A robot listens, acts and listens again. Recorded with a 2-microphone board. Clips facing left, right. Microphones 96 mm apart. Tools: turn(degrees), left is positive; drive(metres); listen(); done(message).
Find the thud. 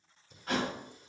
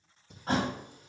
turn(degrees=-35)
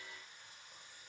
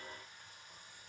listen()
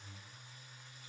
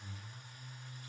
done("I heard a thud, but can't make it out now. It was about straight ahead or 110° right.")